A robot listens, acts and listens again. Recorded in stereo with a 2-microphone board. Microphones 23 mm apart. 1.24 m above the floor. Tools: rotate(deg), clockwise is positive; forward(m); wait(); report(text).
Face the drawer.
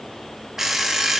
wait()
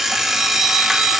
wait()
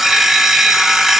report("I can't make out a drawer, only an alarm clock.")